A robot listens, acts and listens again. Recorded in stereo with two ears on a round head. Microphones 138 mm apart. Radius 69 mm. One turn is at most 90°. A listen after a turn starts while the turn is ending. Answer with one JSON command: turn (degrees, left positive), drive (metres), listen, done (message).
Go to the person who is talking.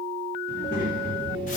{"turn": 55}
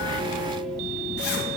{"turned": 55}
{"listen": true}
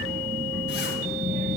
{"drive": 1.0}
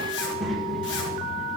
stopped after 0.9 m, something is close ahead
{"done": "I am next to the child speaking."}